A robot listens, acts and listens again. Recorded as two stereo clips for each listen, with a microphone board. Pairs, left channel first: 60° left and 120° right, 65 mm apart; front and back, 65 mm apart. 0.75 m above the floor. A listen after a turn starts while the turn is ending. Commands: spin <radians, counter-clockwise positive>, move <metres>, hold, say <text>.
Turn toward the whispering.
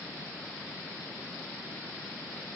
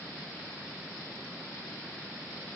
hold
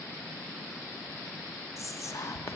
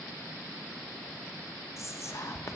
spin 0.52
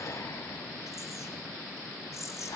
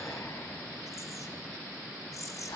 spin 0.44
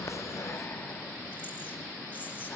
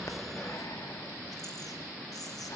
hold
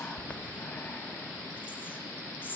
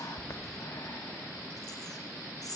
say Facing the whispering, 1 to 2 m away.